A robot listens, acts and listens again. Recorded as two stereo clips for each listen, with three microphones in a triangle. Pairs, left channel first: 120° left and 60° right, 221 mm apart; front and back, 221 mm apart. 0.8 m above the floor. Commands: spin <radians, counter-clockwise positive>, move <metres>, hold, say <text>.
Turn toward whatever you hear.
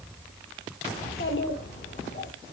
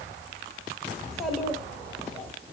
spin 1.40
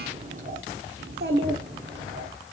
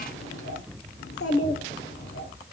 spin -0.61
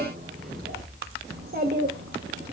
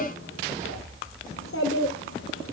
spin -0.35
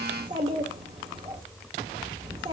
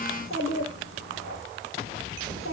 say Facing the child speaking.